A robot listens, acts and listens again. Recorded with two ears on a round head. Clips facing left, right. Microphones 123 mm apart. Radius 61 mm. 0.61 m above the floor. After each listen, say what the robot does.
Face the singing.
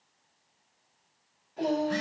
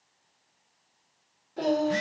Turn 50° right.
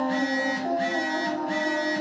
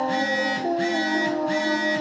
Turn 35° right.
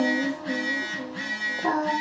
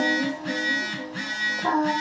Facing the singing.